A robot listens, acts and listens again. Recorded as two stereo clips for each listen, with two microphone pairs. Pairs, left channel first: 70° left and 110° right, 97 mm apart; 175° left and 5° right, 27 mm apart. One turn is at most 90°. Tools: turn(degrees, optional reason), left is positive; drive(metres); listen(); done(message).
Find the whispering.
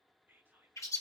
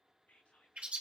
turn(degrees=90, reason="The whispering: straight behind.")
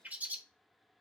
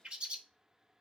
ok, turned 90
turn(degrees=90, reason="Nothing new. It was at 90° left.")
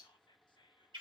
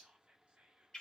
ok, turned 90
turn(degrees=40, reason="The whispering is now 40° left.")
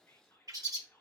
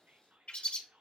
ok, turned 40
done("Facing the whispering.")